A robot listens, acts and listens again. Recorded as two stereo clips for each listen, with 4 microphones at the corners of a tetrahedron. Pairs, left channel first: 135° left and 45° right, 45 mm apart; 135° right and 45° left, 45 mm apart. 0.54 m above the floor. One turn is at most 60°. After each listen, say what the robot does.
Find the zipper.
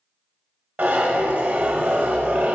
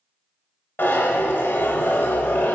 Turn 60° right.
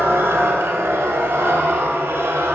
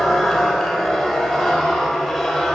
Turn 45° right.
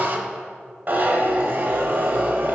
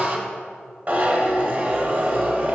Facing the zipper, under 1 m away.